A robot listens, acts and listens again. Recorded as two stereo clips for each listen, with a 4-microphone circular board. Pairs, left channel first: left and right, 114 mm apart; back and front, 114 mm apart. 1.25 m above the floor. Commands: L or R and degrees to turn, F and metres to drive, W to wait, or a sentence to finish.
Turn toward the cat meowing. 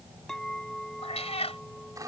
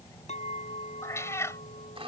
L115
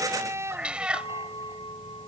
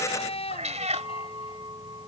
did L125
R10
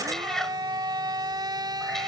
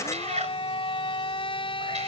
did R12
Facing the cat meowing.